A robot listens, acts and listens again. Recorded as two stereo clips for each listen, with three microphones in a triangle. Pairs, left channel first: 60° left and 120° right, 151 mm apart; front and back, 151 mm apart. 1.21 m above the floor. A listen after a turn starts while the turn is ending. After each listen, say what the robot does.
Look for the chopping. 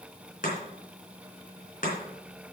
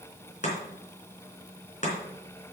Turn 35° left.
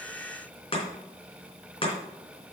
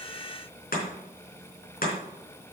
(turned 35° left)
Turn 10° left.
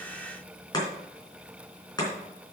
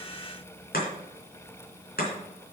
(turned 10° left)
Found it: chopping, straight ahead, 2 to 4 m away.